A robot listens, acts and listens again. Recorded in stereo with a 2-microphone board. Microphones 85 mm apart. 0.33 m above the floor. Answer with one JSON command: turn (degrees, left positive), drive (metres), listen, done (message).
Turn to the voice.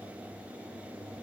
{"listen": true}
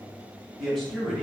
{"turn": 30}
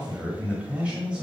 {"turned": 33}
{"turn": -10}
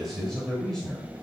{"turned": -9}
{"done": "Found it: a man speaking, straight ahead, 1 to 2 m away."}